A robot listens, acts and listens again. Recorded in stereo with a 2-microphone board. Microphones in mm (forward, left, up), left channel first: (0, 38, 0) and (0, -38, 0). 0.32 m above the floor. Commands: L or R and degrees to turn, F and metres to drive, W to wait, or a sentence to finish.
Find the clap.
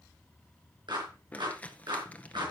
R75
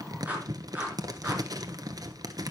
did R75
R20
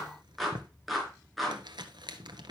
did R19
Facing the clap.